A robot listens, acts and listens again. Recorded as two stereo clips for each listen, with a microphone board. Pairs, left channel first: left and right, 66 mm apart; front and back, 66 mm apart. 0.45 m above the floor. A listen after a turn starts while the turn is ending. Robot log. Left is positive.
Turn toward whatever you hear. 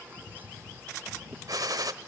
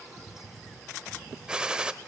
note: The gunshot: 105° right.
cmd yaw -105
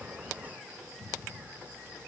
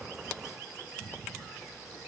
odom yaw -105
end: I heard a gunshot from this way, but can't make it out now.